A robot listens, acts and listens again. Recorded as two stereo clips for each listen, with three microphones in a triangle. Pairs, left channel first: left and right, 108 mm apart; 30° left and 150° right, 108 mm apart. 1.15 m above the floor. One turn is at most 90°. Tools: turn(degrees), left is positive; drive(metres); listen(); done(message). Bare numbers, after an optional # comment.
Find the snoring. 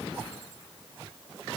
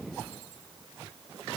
listen()
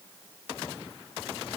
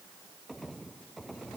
listen()
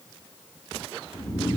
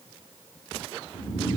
# The snoring: 40° left.
turn(40)
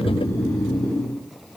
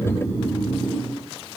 # The snoring is now 10° left.
turn(10)
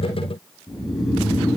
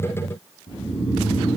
done("Facing the snoring.")